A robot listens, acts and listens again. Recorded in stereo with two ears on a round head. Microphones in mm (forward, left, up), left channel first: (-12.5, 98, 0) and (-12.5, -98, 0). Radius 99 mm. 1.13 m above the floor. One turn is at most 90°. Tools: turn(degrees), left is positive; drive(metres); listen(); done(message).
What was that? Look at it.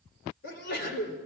turn(degrees=50)
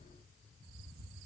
listen()
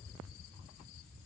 done("I heard a sneeze, but can't make it out now. It was about straight ahead or 80° left.")